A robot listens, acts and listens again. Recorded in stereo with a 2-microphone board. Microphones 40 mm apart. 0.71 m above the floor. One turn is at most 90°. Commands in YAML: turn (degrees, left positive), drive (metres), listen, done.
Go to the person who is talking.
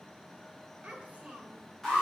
turn: -30
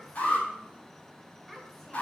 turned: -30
drive: 1.0
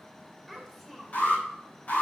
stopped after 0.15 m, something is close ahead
done: "Something is in my way. I am facing the child speaking but have not reached it."